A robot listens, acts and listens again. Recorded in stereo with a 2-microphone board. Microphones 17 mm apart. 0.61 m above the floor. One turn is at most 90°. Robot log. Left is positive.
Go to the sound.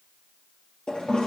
cmd yaw +90
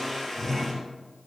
cmd fwd 1.0
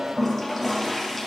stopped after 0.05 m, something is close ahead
end: Blocked. The toilet flushing is further on, straight ahead.